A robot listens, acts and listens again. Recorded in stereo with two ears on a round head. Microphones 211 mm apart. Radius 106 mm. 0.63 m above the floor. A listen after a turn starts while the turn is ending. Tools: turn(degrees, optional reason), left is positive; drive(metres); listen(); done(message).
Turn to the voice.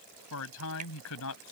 turn(degrees=65, reason="The man speaking: about 65° left or 115° left.")
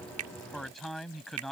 done("Found it: a man speaking, straight ahead.")